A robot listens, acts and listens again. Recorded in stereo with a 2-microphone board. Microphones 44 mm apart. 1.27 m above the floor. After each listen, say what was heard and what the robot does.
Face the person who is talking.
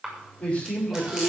The man speaking: about 25° left or 155° left. Turn 25° left.
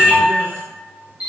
Keep listening.
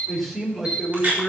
Found it: a man speaking, straight ahead.